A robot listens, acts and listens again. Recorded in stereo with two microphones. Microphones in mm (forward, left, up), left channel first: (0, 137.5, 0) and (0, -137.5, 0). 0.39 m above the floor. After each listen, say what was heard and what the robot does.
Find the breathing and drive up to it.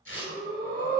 The breathing: about 60° right or 120° right. Turn 60° right.
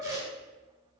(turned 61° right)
Drive 1.0 m forward.
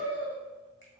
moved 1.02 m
Drive 1.0 m forward.
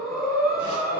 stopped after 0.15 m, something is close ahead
The breathing is now 10° left. Turn 10° left.
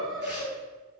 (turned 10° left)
I am next to the breathing.